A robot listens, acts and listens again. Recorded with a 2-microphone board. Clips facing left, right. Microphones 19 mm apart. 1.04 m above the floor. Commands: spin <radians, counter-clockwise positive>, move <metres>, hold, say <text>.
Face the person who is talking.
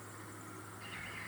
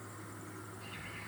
hold
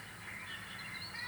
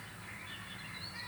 hold
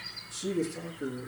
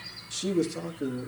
spin -1.05
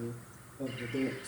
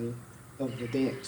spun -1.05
spin -1.05
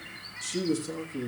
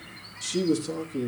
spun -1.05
spin -0.35
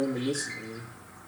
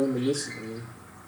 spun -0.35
say Found it: a man speaking, straight ahead.